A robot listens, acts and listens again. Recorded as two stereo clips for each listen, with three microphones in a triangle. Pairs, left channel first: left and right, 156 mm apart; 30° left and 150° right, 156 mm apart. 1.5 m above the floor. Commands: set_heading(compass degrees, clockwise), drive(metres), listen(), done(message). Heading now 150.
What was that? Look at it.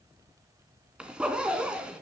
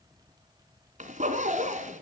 set_heading(325)
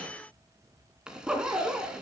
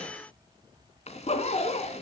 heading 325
done("Facing the zipper.")